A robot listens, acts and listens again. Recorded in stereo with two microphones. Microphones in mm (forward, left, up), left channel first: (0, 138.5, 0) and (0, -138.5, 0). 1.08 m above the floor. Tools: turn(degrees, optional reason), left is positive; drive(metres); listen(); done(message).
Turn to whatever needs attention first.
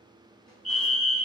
turn(degrees=-55, reason="The fire alarm: about 55° right or 125° right.")
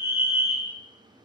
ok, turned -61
turn(degrees=-10, reason="So it is at 10° right.")
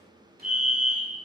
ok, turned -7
done("Facing the fire alarm.")